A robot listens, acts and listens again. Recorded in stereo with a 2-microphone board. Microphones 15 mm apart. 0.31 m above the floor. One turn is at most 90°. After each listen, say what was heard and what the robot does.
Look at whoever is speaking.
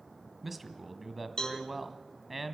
Turn 30° right.
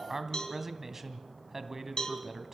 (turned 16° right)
So it is at 160° right. Turn 90° right.
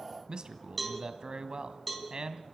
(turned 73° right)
The man speaking is now 85° right. Turn 85° right.
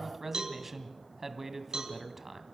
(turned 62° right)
The man speaking is now 20° right. Turn 20° right.
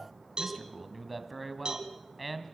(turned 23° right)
Found it: a man speaking, straight ahead, 1 to 2 m away.